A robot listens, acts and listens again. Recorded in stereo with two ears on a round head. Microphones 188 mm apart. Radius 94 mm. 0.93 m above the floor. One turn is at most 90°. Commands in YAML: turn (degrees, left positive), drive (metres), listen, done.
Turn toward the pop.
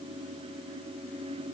listen: true
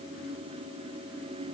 listen: true
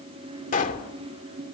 turn: 40
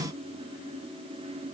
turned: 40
listen: true
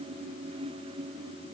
done: "I heard a pop, but can't make it out now. It was about straight ahead or 100° left."